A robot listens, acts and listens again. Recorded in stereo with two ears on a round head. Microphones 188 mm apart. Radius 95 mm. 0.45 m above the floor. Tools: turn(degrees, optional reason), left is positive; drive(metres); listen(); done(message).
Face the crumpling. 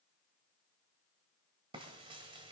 listen()
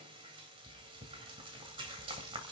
listen()
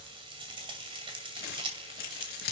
turn(degrees=45, reason="The crumpling: about 45° left or 135° left.")
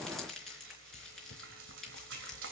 done("Facing the crumpling, over 4 m away.")